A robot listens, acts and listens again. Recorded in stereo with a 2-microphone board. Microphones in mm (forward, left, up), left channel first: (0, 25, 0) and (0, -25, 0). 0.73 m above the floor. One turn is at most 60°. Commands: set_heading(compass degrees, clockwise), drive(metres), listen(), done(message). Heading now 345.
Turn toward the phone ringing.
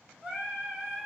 listen()
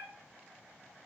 listen()
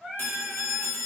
set_heading(300)
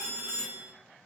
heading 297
set_heading(237)
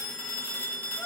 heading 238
set_heading(213)
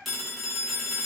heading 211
done("Found it: a phone ringing, straight ahead, under 1 m away.")